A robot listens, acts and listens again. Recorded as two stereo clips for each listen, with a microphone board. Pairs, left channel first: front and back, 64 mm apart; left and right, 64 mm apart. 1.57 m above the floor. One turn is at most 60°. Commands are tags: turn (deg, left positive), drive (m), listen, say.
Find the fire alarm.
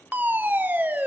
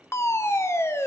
<turn deg="60"/>
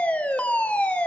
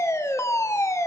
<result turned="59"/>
<turn deg="60"/>
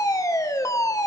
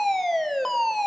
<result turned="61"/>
<say>Found it: a fire alarm, straight ahead, 1 to 2 m away.</say>